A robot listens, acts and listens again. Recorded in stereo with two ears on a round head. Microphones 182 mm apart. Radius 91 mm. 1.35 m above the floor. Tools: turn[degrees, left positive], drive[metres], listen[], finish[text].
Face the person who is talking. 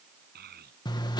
Thought: The child speaking: about 50° right or 130° right.
Action: turn[-50]
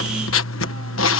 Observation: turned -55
Action: listen[]
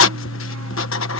Action: listen[]
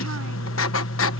Action: finish[I heard a child speaking, but can't make it out now. It was about 5° left or 75° right.]